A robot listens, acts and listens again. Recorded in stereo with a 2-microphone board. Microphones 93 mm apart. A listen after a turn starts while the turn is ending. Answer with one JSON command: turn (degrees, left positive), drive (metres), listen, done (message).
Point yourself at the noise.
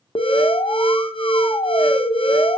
{"turn": 70}
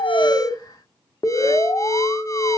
{"turn": 40}
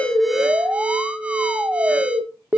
{"turn": -15}
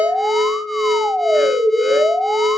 {"done": "Found it: an alarm, straight ahead, under 1 m away."}